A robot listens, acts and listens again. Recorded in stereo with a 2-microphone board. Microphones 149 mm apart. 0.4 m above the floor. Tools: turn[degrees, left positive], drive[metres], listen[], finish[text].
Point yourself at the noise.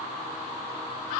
Action: listen[]
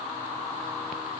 Action: listen[]
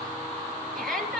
Action: turn[30]
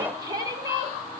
Thought: So it is at 25° right.
Action: turn[-25]
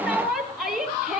Action: finish[Found it: a shout, straight ahead.]